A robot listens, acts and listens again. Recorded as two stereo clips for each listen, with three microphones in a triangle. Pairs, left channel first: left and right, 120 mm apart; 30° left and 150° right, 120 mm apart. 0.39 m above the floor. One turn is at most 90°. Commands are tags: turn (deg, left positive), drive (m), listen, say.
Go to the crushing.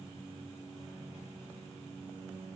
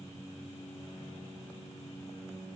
<listen/>
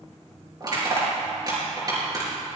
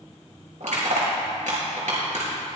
<turn deg="-90"/>
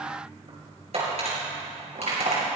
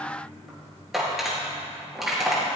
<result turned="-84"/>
<turn deg="-60"/>
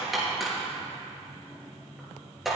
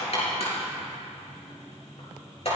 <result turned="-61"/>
<drive m="1.0"/>
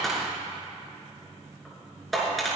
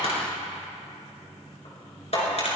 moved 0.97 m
<drive m="1.0"/>
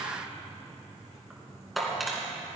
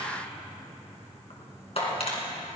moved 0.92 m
<drive m="1.0"/>
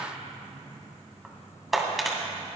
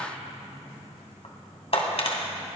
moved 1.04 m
<drive m="1.0"/>
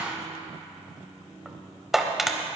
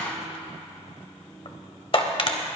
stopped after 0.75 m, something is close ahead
<say>I am next to the crushing.</say>